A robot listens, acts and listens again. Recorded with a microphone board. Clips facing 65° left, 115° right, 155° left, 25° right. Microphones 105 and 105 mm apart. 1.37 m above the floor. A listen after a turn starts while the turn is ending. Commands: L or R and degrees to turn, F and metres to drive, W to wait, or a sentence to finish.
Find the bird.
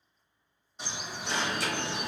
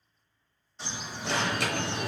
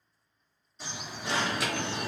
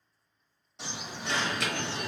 R10
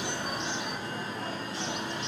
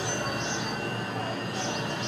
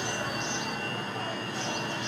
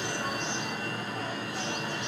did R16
L10
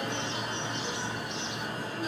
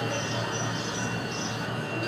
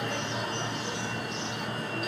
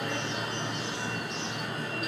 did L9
W
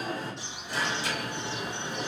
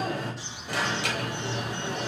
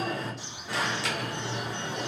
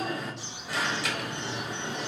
Facing the bird, 1 to 2 m away.